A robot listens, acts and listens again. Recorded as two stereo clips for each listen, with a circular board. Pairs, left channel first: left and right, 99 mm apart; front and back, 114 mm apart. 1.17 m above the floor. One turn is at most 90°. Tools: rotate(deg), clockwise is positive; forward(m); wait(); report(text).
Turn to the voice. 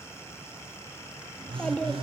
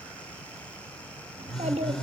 rotate(-90)
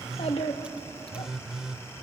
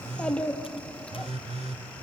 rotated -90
rotate(-80)
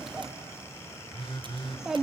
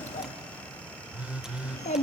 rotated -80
report("Found it: a child speaking, straight ahead, 1 to 2 m away.")